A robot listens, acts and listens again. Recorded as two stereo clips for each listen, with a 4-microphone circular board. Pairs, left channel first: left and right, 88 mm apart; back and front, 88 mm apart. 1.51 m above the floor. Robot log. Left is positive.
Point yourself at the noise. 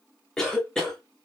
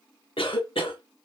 note: The cough: 175° left.
cmd yaw +175
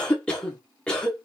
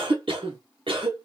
note: The cough is now 10° left.
cmd yaw +10
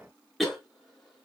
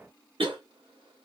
end: Found it: a cough, straight ahead.